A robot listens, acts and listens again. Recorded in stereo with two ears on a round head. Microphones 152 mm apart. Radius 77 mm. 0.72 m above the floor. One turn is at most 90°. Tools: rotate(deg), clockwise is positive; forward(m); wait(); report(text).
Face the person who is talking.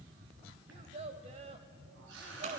rotate(40)
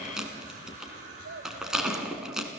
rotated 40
rotate(90)
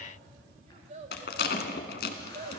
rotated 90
rotate(35)
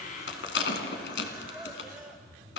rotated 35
wait()
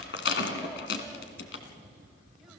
wait()
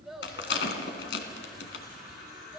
report("Facing the child speaking, 2 to 4 m away.")